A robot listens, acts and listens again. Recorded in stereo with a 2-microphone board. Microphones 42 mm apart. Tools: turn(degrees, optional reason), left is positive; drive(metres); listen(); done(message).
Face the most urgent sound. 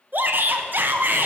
turn(degrees=-55, reason="The shout: about 55° right or 125° right.")
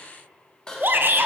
turn(degrees=-65, reason="So it is at 65° right.")
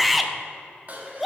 done("Facing the shout.")